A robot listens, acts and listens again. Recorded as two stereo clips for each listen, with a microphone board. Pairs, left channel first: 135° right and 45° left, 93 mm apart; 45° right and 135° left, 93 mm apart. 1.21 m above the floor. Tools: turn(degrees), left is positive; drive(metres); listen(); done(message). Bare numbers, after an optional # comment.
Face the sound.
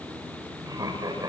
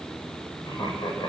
done("Facing the laughter.")